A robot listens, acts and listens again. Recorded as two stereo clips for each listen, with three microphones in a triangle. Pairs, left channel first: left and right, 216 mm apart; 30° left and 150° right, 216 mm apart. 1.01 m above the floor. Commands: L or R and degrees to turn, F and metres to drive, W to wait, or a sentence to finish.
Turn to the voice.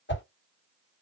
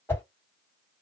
W
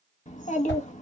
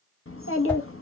L35
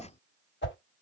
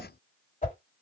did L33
Facing the child speaking.